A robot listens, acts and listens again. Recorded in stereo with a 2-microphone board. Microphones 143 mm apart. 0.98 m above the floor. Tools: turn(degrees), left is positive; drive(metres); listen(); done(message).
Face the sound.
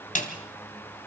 turn(degrees=60)
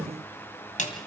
turn(degrees=55)
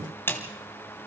turn(degrees=15)
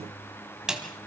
done("Found it: a snare drum, straight ahead, 2 to 4 m away.")